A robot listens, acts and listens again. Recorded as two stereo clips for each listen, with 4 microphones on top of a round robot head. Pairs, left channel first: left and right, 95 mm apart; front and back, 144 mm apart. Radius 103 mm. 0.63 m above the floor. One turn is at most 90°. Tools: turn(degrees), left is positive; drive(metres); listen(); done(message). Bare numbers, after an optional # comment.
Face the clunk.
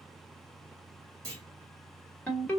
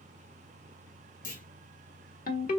# The clunk: 30° right.
turn(-30)
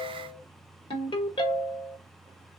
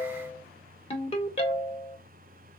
done("I heard a clunk from this way, but can't make it out now.")